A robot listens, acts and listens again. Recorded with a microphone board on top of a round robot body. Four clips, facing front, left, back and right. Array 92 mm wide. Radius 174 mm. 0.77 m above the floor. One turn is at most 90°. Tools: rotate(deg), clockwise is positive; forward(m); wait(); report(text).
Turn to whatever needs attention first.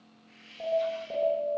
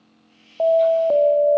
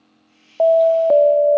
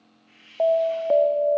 rotate(-90)
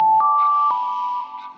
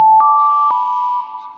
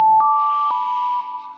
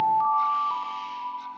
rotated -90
rotate(-90)
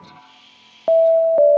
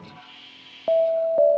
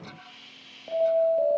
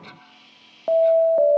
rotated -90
report("Facing the alarm, 2 to 4 m away.")